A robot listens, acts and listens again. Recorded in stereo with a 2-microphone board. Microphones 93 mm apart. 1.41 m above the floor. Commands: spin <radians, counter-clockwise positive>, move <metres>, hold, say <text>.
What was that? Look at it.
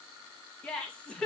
spin 0.52
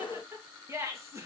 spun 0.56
spin -0.52
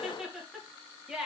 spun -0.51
spin -0.17
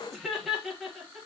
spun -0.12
say Found it: laughter, straight ahead.